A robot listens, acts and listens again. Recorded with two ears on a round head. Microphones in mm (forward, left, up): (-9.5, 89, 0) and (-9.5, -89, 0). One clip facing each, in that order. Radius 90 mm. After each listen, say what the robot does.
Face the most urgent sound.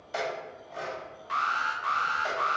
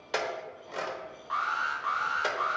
Turn 30° left.
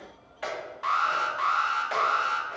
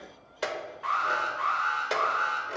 Turn 115° left.
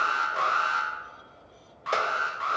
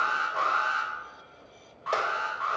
Turn 35° left.
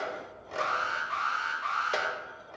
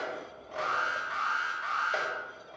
Facing the alarm.